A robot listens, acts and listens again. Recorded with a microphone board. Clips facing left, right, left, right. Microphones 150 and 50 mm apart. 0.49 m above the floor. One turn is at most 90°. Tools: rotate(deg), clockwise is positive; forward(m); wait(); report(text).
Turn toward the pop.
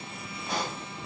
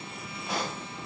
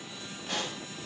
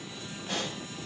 rotate(-30)
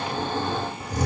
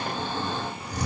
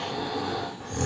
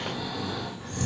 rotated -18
wait()
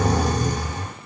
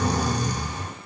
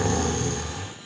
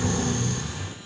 report("I heard a pop, but can't make it out now. It was about 20° right or 165° left.")